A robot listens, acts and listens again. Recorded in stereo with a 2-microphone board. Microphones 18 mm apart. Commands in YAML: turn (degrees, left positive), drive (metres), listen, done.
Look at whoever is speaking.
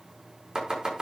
listen: true
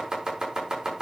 listen: true
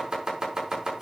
done: "I can't make out anyone speaking to turn to."